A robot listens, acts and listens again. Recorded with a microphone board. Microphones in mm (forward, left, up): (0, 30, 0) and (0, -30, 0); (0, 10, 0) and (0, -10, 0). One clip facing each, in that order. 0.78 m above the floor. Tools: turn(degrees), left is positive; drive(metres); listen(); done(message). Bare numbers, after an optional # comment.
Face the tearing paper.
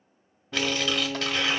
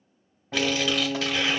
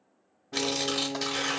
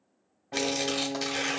turn(30)
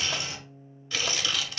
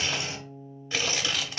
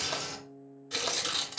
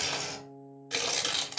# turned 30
# So it is at 30° right.
turn(-30)
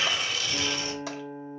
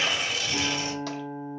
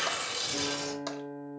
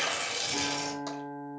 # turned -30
# The tearing paper is now 25° right.
turn(-25)
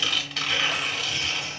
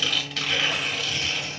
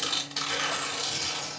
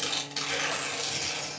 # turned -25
done("Facing the tearing paper.")